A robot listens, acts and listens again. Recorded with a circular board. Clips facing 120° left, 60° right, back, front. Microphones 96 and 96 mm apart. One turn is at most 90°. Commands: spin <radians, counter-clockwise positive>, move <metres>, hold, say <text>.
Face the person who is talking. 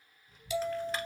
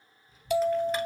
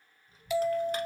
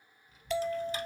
spin 1.57
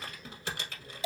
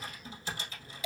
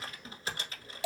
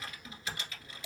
spin 0.79
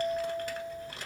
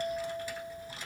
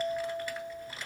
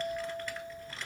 spin 0.26
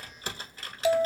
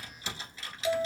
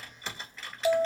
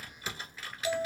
say Found it: a child speaking, straight ahead, 1 to 2 m away.